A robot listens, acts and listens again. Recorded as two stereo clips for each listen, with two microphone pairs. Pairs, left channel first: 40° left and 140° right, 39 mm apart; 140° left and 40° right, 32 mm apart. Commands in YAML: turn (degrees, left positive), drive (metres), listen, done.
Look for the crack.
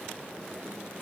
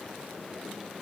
listen: true
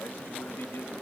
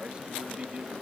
listen: true
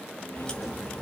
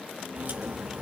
turn: -25
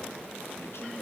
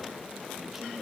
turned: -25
done: "Facing where the crack came from. I can't hear it now."